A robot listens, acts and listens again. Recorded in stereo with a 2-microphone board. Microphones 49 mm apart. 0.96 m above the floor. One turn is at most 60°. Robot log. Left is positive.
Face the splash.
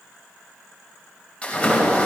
note: The splash: about 25° left or 155° left.
cmd yaw +25
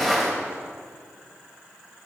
end: Facing the splash.